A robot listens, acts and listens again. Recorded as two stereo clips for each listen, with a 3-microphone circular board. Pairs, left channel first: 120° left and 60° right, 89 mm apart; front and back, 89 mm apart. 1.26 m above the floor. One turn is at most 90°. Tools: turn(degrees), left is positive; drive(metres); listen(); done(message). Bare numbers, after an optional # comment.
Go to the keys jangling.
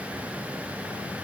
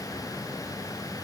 listen()
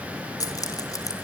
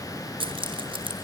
# The keys jangling: 165° left.
turn(90)
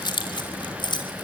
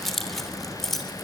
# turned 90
# The keys jangling is now 90° left.
turn(90)
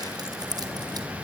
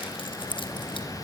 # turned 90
# The keys jangling is now 20° right.
turn(-20)
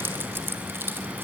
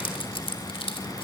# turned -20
drive(1.0)
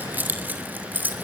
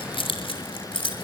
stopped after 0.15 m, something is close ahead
# The keys jangling is now 10° left.
turn(10)
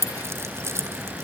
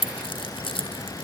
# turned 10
done("Blocked. The keys jangling is further on, straight ahead.")